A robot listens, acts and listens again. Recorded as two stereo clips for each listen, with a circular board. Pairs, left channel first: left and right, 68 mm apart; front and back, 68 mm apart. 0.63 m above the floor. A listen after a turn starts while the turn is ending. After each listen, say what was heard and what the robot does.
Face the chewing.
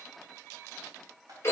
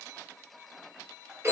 Keep listening.
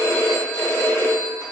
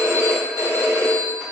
Keep listening.
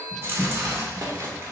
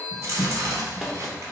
The chewing: 140° right. Turn 140° right.
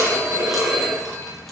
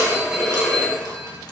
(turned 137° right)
Keep listening.
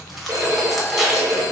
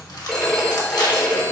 Facing the chewing.